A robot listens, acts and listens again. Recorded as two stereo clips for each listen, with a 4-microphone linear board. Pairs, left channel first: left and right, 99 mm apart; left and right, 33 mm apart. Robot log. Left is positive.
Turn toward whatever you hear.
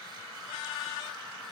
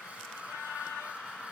cmd idle
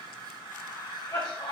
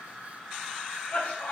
note: The cough: about 45° left or 135° left.
cmd yaw +45
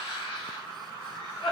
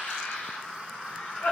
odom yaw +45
note: So it is at 90° left.
cmd yaw +90
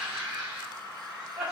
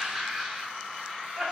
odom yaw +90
end: Found it: a cough, straight ahead.